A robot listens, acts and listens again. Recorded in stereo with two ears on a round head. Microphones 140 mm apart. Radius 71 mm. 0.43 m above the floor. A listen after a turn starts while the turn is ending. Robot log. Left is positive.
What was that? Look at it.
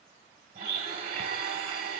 note: The blender: about 65° right or 115° right.
cmd yaw -65
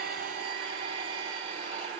note: So it is at 35° right.
cmd yaw -35
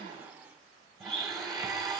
end: Found it: a blender, straight ahead.